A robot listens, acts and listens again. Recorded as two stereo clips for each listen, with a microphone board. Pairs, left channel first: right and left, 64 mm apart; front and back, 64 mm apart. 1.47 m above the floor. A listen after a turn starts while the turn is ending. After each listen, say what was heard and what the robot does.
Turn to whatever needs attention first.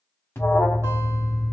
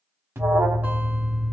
The alarm: 135° right. Turn 135° right.
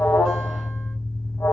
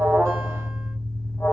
The alarm is now 55° right. Turn 55° right.
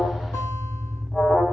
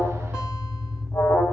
Found it: an alarm, straight ahead, 1 to 2 m away.